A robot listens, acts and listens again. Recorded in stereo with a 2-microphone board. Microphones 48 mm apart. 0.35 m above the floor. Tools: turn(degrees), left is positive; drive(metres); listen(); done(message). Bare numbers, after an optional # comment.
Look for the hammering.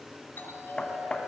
# The hammering: about 20° left or 160° left.
turn(20)
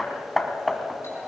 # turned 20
done("Facing the hammering, 1 to 2 m away.")